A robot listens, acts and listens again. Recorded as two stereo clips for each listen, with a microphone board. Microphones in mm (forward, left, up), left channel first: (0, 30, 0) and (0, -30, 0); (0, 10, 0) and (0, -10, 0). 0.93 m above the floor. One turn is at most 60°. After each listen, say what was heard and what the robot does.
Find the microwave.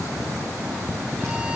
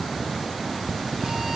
Keep listening.
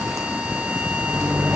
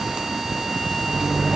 The microwave: about 55° right or 125° right. Turn 55° right.
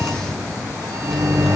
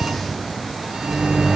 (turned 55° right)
So it is at 65° right. Turn 60° right.
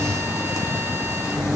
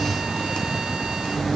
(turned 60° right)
Found it: a microwave, straight ahead.